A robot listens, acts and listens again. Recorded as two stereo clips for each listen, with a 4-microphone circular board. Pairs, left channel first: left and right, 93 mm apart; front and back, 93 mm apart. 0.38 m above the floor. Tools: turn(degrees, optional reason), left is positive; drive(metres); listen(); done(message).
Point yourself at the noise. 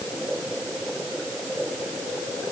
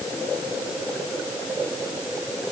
listen()
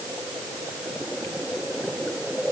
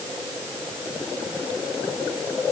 listen()
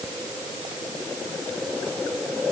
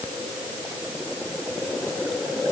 done("I can't make out anything to turn to.")